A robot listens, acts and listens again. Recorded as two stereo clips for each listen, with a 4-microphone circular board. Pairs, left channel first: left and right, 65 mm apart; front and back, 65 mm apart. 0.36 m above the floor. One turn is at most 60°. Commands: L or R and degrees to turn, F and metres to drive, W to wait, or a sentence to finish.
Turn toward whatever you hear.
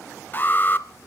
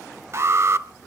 L60
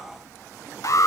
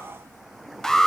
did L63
L60
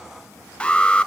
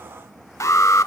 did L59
L20
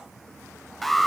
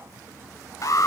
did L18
Found it: an alarm, straight ahead.